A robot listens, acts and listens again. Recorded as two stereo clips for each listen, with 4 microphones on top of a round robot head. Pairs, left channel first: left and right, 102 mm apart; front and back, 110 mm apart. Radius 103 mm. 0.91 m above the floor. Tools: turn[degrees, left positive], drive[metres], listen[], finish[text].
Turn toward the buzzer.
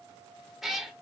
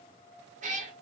Action: listen[]
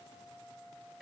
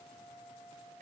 Action: listen[]
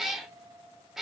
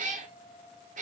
Action: finish[I can't make out a buzzer, only a cat meowing.]